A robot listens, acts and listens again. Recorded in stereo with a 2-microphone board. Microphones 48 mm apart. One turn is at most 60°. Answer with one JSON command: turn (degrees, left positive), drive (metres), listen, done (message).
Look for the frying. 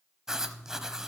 {"listen": true}
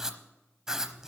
{"listen": true}
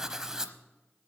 {"done": "I can't make out frying, only writing."}